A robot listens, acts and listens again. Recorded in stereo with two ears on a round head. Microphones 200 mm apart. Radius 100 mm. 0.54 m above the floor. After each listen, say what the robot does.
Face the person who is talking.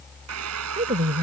Turn 30° right.
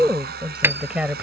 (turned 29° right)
Facing the woman speaking.